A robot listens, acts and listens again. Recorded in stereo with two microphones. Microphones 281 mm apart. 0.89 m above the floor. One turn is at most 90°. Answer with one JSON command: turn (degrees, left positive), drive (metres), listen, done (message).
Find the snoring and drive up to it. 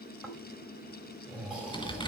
{"turn": -30}
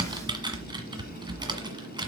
{"listen": true}
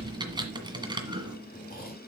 {"turn": 30}
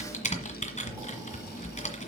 {"listen": true}
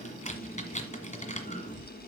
{"turn": -10}
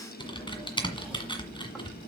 {"listen": true}
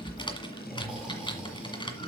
{"drive": 1.0}
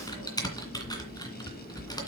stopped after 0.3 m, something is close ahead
{"done": "Blocked. The snoring is further on, straight ahead."}